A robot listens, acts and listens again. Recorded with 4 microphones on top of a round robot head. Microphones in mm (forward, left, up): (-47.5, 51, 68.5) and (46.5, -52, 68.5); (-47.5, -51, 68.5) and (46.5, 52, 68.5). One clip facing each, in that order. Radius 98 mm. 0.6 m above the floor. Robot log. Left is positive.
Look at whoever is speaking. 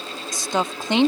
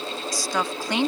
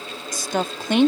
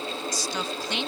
note: The woman speaking: 160° right.
cmd yaw -160
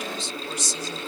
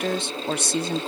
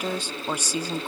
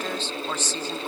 note: The woman speaking is now 55° right.
cmd yaw -55
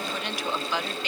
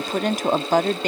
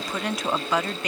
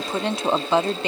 note: The woman speaking is now 10° right.
cmd yaw -10
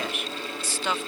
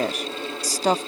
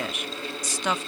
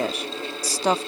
end: Found it: a woman speaking, straight ahead.